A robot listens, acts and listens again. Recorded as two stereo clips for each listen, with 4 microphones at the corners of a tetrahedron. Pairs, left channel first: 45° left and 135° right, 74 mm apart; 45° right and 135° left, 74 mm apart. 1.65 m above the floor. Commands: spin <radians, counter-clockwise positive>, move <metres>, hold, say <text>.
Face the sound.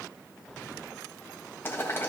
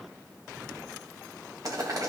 spin 1.75
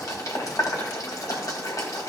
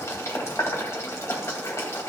say Found it: boiling, straight ahead.